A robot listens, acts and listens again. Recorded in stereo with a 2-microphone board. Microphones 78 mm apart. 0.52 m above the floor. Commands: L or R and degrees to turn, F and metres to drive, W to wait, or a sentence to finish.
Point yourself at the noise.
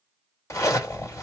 L40
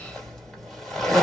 Facing the zipper.